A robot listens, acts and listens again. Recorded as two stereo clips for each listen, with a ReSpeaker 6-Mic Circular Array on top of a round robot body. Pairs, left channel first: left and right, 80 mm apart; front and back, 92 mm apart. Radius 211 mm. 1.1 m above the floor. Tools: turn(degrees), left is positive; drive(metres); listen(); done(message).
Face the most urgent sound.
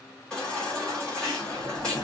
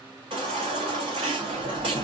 turn(degrees=170)
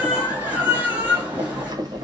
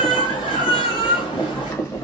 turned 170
turn(degrees=-20)
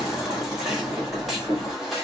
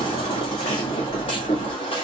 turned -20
done("Facing the baby crying, 1 to 2 m away.")